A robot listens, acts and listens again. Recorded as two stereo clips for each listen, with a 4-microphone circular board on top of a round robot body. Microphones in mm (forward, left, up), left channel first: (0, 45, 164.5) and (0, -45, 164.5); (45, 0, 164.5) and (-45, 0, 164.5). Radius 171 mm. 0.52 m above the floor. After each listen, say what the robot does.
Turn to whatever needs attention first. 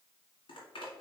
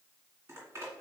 Keep listening.
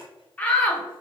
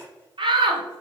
Turn 165° left.
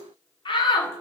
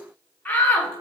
Turn 70° left.
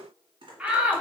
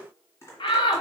Turn 15° right.
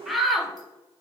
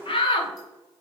Facing the shout.